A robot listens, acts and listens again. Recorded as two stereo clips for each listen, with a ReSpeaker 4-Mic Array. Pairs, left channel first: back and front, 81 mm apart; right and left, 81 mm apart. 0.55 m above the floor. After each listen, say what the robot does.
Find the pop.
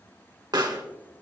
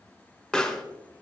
Turn 10° right.
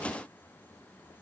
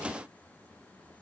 I heard a pop from this way, but can't make it out now.